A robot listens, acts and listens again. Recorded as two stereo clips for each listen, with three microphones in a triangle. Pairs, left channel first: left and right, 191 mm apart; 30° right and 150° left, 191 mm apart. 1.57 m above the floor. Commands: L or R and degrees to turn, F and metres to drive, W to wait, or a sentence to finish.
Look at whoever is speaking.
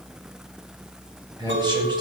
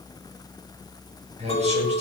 R155
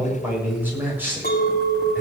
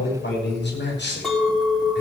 R10
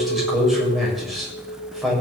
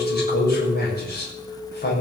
Facing the man speaking.